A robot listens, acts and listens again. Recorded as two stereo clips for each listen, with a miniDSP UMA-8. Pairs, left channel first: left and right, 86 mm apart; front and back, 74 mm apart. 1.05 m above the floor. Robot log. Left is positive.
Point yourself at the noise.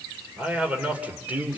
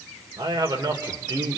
note: The man speaking: 160° right.
cmd yaw -160
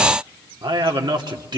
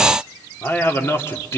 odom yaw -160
note: The man speaking is now 55° right.
cmd yaw -55
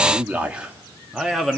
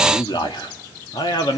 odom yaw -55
end: Facing the man speaking, 1 to 2 m away.